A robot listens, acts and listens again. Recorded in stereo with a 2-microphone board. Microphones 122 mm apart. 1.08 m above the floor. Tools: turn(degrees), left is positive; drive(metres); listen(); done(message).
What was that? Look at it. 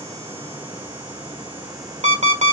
turn(degrees=-65)
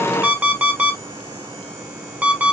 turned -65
turn(degrees=-15)
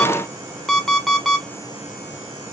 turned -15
done("Found it: an alarm clock, straight ahead.")